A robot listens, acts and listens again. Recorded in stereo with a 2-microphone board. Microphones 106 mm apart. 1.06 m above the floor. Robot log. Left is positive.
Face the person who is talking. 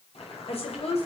note: The woman speaking: about 75° left or 105° left.
cmd yaw +75
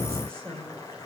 note: So it is at 10° left.
cmd yaw +10
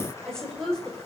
end: Found it: a woman speaking, straight ahead.